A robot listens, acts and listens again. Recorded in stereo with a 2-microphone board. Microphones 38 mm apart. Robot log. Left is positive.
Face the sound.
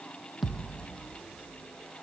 cmd yaw +30
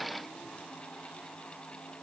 cmd idle
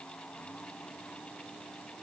end: I heard a thud, but can't make it out now. It was about 30° right or 150° left.